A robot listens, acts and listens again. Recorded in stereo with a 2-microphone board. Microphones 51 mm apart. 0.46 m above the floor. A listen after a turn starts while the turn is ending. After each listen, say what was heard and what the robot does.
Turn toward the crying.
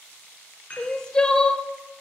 The crying: about 20° left or 160° left. Turn 20° left.
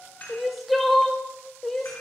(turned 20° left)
Facing the crying, under 1 m away.